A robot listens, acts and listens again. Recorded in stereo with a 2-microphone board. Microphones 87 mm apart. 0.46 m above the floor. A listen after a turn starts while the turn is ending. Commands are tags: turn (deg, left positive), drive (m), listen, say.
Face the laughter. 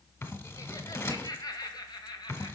<turn deg="55"/>
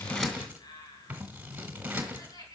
<turn deg="50"/>
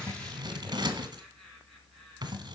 <say>Facing the laughter, over 4 m away.</say>